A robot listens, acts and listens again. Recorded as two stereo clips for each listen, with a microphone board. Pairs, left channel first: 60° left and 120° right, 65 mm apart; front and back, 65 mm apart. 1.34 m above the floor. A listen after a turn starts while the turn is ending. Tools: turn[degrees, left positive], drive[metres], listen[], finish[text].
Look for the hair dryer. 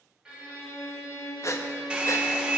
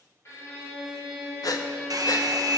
Thought: The hair dryer: 165° left.
Action: turn[165]
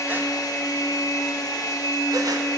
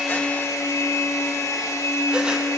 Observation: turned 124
Thought: The hair dryer is now 40° left.
Action: turn[40]
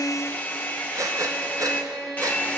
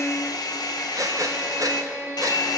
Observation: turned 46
Action: finish[Found it: a hair dryer, straight ahead.]